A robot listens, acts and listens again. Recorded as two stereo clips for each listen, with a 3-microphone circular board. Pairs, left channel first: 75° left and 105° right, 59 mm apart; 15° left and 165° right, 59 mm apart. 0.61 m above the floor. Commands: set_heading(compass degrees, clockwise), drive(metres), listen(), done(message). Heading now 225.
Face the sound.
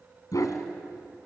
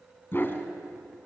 set_heading(160)
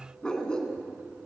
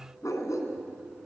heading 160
done("Facing the dog barking, 2 to 4 m away.")